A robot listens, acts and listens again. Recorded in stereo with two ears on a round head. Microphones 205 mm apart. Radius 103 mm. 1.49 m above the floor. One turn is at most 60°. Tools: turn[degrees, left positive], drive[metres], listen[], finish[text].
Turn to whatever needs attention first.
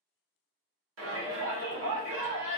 Thought: The shout: about 60° right or 120° right.
Action: turn[-60]
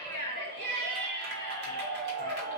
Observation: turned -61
Thought: So it is at 55° right.
Action: turn[-55]
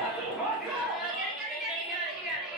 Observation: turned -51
Action: finish[Found it: a shout, straight ahead.]